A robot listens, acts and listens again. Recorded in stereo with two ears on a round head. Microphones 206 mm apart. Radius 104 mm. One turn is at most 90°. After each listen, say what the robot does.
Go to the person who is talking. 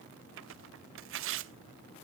Keep listening.
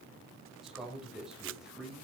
Turn 30° right.
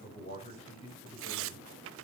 Turn 30° left.
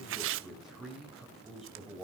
Drive 1.0 m forward.
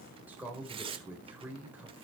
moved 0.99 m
Turn 10° right.
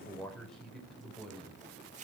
Drive 1.0 m forward.
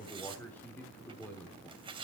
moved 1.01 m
Drive 1.0 m forward.
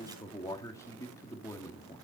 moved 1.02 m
Turn 15° left.
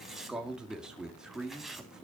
Drive 1.0 m forward.
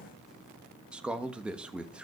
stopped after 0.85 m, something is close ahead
Arrived at the man speaking, straight ahead.